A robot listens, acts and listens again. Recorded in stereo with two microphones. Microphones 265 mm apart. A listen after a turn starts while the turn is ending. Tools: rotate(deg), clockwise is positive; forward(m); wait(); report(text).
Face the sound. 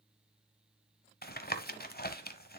rotate(-35)
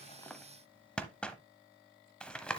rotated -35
report("Found it: tapping, straight ahead.")